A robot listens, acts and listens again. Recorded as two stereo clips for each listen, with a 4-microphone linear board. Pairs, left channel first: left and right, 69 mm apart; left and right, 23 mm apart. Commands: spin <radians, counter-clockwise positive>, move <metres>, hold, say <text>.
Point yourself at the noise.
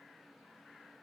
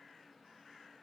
hold
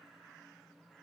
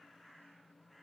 hold
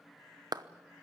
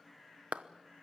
spin -1.57
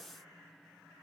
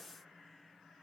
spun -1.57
hold
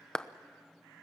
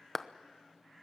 spin 0.17
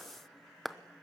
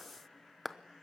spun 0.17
say Found it: a clap, straight ahead.